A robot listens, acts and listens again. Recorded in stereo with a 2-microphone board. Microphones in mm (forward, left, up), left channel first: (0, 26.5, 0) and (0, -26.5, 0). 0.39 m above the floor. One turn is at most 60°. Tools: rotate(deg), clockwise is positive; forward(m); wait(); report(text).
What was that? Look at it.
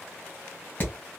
rotate(-40)
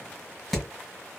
report("Facing the hammering.")